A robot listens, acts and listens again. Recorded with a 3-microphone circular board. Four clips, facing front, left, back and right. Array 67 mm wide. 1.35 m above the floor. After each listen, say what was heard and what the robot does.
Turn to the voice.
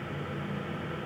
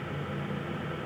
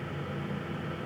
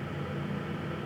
Keep listening.
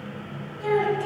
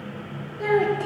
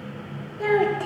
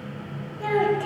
The child speaking: 160° left. Turn 160° left.
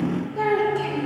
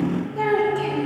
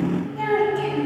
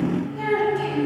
The child speaking is now 40° left. Turn 40° left.
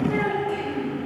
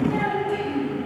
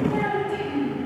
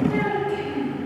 The child speaking is now 10° right. Turn 10° right.
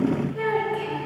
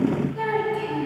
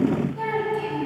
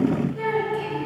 Facing the child speaking, over 4 m away.